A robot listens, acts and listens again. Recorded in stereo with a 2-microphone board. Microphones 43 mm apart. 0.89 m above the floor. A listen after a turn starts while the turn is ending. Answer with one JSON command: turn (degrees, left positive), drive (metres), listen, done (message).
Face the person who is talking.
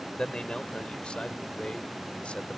{"turn": 30}
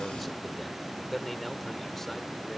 {"done": "Facing the man speaking."}